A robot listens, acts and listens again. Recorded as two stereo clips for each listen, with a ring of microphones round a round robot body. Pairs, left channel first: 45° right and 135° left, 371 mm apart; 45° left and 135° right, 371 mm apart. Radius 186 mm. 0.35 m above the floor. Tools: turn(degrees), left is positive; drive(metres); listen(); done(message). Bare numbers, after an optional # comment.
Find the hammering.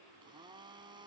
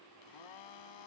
listen()
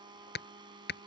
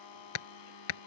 # The hammering: 20° left.
turn(20)
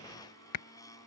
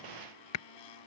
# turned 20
done("Found it: hammering, straight ahead.")